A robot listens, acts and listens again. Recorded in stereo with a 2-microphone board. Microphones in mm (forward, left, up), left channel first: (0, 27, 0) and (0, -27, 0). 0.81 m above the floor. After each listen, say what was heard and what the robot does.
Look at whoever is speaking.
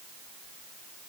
Keep listening.
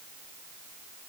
Keep listening.
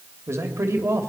The man speaking: about 55° right or 125° right. Turn 55° right.
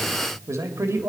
So it is at 60° right. Turn 60° right.
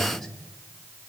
The man speaking is now 10° left. Turn 10° left.
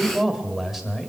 Found it: a man speaking, straight ahead, 1 to 2 m away.